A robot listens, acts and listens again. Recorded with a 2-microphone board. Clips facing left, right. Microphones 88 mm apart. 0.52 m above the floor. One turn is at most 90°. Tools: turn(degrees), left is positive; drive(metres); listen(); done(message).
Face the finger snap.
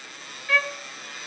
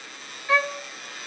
listen()
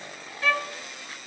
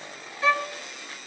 listen()
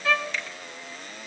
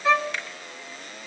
turn(degrees=-55)
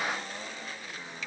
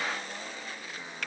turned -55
turn(degrees=-65)
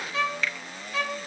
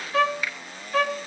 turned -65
turn(degrees=-10)
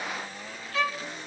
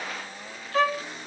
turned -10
listen()
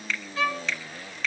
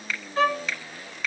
done("Found it: a finger snap, straight ahead.")